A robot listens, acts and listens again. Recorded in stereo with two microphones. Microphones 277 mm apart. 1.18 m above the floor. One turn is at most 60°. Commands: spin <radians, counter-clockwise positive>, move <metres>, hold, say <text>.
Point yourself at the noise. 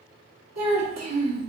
spin -1.05
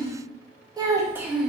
say Facing the child speaking.